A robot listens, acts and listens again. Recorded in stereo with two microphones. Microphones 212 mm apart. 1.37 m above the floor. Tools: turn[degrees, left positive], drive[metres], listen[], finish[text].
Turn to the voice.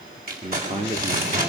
Thought: The man speaking: about 25° right or 155° right.
Action: turn[-25]
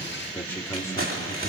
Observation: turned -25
Thought: So it is at 15° left.
Action: turn[15]
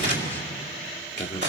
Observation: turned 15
Thought: The man speaking is now 15° left.
Action: turn[15]
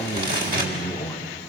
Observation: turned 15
Thought: The man speaking is now 15° left.
Action: turn[15]
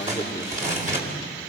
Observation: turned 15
Thought: The man speaking is now 15° left.
Action: turn[15]
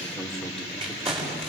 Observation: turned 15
Action: finish[Found it: a man speaking, straight ahead, 2 to 4 m away.]